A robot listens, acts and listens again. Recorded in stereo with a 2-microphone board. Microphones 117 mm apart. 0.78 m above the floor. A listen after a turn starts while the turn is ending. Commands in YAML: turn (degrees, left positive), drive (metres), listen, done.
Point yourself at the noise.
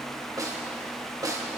turn: -30
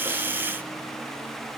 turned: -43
listen: true
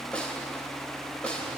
turn: 10
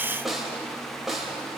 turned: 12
done: "Found it: a snare drum, straight ahead, over 4 m away."